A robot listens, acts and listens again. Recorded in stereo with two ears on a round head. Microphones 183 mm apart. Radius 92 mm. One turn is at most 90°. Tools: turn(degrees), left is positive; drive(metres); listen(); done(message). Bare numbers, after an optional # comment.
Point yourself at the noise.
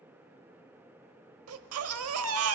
turn(-90)
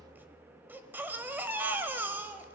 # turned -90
# So it is at 10° right.
turn(-10)
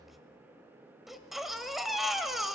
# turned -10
done("Facing the baby crying, 1 to 2 m away.")